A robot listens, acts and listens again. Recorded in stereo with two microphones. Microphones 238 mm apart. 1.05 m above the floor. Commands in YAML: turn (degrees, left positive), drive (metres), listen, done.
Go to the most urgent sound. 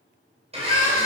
turn: 35
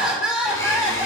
drive: 1.0
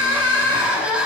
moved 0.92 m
drive: 1.0
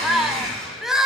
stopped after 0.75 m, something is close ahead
done: "Arrived at the crying, straight ahead."